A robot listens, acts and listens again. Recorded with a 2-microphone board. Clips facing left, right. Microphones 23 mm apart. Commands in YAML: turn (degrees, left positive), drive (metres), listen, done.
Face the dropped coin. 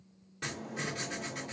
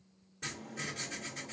listen: true
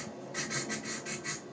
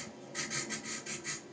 listen: true
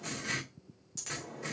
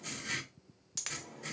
turn: -40
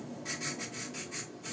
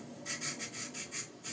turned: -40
listen: true
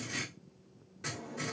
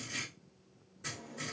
done: "I heard a dropped coin, but can't make it out now. It was about straight ahead or 100° right."